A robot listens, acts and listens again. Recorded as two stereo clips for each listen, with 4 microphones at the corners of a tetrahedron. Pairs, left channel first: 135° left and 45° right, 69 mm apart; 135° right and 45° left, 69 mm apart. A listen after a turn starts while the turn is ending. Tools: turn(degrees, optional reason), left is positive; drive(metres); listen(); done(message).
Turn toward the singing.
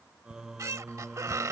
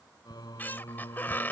turn(degrees=-135, reason="The singing: 135° right.")
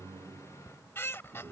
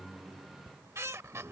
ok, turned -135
done("Facing the singing.")